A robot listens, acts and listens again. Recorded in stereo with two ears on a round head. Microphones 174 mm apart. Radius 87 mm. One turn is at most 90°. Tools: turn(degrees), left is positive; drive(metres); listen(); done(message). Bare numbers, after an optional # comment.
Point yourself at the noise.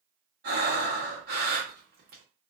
# The breathing: about 55° right or 125° right.
turn(-55)
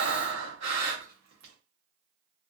# So it is at 70° right.
turn(-70)
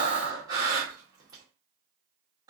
# The breathing is now 20° right.
turn(-20)
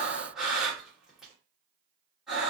done("Facing the breathing, 1 to 2 m away.")